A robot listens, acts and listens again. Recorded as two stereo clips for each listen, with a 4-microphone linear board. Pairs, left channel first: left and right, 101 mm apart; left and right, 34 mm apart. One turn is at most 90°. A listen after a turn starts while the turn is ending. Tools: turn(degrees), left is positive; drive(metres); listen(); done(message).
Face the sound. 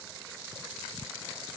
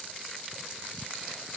listen()
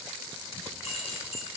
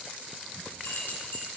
turn(degrees=90)
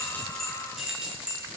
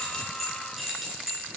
turn(degrees=-10)
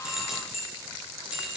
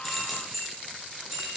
turn(degrees=-10)
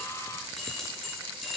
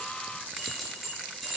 done("Found it: keys jangling, straight ahead, over 4 m away.")